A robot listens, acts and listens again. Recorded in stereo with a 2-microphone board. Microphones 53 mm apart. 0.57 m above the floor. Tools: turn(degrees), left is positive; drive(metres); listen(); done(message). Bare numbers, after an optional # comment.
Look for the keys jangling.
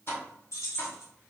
# The keys jangling: about 75° left or 105° left.
turn(75)
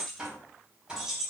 # So it is at 10° right.
turn(-10)
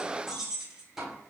# The keys jangling is now 15° right.
turn(-15)
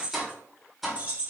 # The keys jangling is now 35° right.
turn(-35)
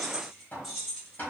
done("Facing the keys jangling, 1 to 2 m away.")